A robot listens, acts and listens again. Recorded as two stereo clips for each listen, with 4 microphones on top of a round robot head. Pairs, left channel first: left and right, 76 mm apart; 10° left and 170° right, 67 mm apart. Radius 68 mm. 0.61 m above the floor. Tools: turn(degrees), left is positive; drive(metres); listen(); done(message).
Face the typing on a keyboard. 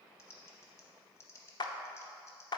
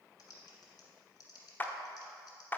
turn(degrees=40)
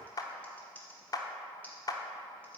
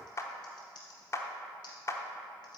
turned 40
turn(degrees=20)
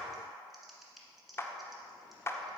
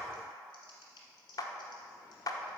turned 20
done("Facing the typing on a keyboard, 1 to 2 m away.")